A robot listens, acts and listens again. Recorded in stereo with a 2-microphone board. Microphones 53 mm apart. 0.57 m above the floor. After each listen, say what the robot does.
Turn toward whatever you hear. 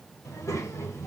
Turn 70° left.
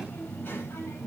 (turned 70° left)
Turn 45° left.
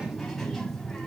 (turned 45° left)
Facing the child speaking.